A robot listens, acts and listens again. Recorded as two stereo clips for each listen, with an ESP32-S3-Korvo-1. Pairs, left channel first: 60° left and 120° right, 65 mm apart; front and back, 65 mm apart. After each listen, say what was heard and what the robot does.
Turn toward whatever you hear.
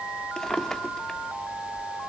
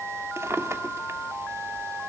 The drawer: 140° left. Turn 140° left.
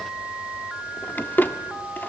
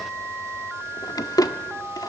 Found it: a drawer, straight ahead, 1 to 2 m away.